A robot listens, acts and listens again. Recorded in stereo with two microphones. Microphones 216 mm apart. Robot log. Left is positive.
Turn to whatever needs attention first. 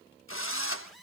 cmd yaw +30
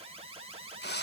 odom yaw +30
note: So it is at 30° right.
cmd yaw -30
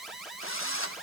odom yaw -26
end: Found it: an alarm, straight ahead.